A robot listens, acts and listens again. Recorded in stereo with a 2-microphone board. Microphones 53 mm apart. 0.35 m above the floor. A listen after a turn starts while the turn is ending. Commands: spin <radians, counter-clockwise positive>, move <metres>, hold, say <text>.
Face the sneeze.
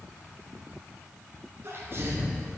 spin -0.79
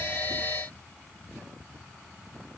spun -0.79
hold
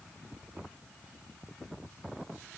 say I heard a sneeze, but can't make it out now. It was about straight ahead or 90° right.